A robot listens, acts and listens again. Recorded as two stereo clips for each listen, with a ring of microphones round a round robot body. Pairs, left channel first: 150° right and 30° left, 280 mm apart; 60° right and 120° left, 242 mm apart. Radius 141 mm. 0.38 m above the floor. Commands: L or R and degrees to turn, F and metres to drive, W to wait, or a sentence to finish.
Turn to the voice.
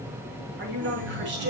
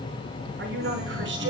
L80
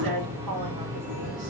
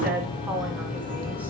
L35
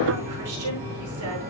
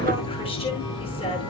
W
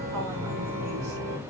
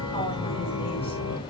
W
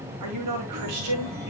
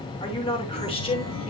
L10
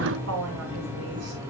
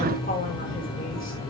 Found it: a woman speaking, straight ahead.